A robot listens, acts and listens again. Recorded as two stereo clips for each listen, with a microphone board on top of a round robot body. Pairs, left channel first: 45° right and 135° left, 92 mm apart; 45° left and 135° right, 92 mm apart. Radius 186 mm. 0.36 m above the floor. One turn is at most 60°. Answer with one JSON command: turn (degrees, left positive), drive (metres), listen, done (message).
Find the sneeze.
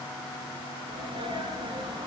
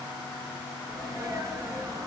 {"turn": 60}
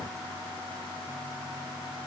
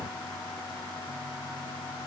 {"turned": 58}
{"turn": 60}
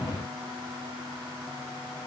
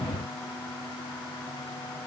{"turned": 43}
{"turn": 60}
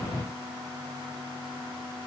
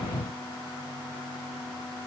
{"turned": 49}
{"turn": 20}
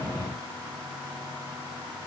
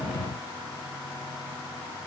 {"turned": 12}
{"turn": 10}
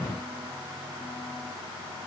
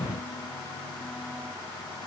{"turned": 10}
{"done": "I heard a sneeze from this way, but can't make it out now."}